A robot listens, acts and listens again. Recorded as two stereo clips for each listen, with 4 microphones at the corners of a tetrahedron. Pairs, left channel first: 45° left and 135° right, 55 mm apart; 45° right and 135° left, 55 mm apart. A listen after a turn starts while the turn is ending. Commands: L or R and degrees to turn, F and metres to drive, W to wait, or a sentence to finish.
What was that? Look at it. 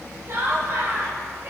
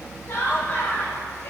R95
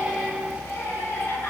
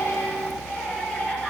L20
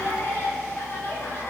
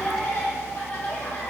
Facing the laughter, over 4 m away.